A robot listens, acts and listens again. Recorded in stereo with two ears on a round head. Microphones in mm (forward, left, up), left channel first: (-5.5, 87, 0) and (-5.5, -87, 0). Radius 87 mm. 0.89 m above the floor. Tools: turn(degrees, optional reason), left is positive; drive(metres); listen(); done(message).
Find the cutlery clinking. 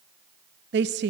listen()
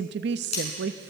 turn(degrees=35, reason="The cutlery clinking: about 35° left or 145° left.")
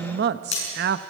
turn(degrees=110, reason="So it is at 110° left.")
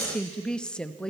listen()
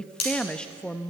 turn(degrees=35, reason="The cutlery clinking is now 35° left.")
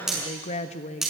done("Facing the cutlery clinking.")